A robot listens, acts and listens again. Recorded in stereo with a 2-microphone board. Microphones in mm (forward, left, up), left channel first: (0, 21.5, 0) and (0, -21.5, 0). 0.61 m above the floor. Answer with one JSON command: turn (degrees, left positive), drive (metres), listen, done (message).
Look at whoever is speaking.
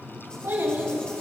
{"turn": -90}
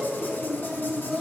{"turn": 10}
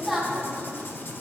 {"done": "Found it: a child speaking, straight ahead, 2 to 4 m away."}